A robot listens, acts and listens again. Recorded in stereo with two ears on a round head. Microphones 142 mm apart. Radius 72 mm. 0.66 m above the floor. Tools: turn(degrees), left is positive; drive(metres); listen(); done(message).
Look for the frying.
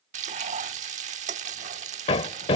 turn(degrees=-45)
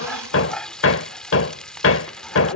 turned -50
done("Facing the frying.")